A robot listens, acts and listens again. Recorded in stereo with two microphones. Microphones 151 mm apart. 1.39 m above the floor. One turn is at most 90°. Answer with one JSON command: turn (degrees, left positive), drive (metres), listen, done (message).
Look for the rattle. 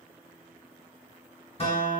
{"listen": true}
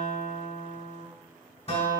{"listen": true}
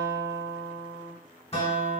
{"done": "I can't make out a rattle to turn to."}